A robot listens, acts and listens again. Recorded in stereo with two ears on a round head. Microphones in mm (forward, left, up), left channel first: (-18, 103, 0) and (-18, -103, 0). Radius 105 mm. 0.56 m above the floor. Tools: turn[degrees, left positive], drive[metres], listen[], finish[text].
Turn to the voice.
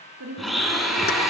Thought: The woman speaking: about 75° right or 105° right.
Action: turn[-75]
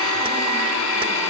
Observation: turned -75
Action: listen[]
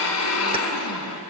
Action: listen[]
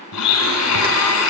Action: finish[I heard a woman speaking, but can't make it out now. It was about straight ahead or 30° right.]